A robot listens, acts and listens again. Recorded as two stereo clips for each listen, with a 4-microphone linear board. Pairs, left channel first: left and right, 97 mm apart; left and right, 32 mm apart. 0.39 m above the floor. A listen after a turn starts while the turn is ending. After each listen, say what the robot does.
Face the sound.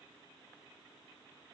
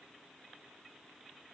Keep listening.
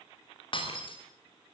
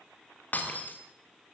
Turn 55° left.
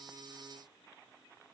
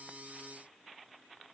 Keep listening.
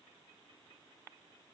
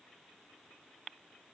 I heard breaking glass, but can't make it out now. It was about straight ahead or 70° left.